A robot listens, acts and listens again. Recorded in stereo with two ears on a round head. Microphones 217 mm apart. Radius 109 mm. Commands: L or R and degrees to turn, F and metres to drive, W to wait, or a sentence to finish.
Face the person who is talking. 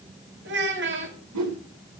R50
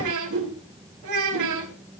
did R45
R85
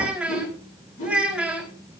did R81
Found it: a child speaking, straight ahead.